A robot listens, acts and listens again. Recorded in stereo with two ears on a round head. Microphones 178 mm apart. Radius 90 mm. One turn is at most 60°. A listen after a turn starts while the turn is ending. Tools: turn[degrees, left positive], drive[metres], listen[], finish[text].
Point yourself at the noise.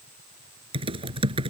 Thought: The typing on a keyboard: about 30° right or 150° right.
Action: turn[-30]
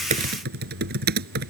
Thought: So it is at 125° right.
Action: turn[-60]
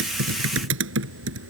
Thought: The typing on a keyboard is now 70° right.
Action: turn[-60]
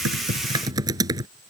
Thought: The typing on a keyboard is now 20° right.
Action: turn[-20]
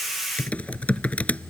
Action: finish[Facing the typing on a keyboard.]